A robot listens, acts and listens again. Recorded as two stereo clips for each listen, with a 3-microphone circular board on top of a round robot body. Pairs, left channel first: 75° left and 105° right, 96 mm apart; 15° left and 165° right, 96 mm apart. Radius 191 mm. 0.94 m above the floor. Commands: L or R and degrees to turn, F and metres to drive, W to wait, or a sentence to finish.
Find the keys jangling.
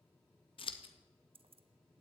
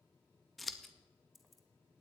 R75
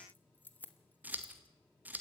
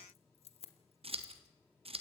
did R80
Facing the keys jangling, 1 to 2 m away.